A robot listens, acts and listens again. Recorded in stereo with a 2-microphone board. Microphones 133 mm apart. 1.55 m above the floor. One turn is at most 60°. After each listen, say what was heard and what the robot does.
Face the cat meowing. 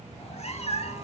The cat meowing: about 55° left or 125° left. Turn 55° left.
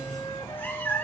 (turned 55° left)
So it is at 20° left. Turn 20° left.
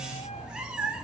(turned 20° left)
Found it: a cat meowing, straight ahead.